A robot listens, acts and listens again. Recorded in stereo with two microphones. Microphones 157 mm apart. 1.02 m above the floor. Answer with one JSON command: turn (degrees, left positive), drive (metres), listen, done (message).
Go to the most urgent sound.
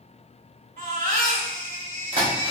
{"turn": -90}
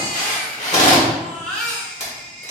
{"drive": 1.0}
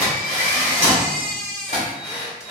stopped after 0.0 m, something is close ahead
{"done": "Something is in my way. I am facing the baby crying but have not reached it."}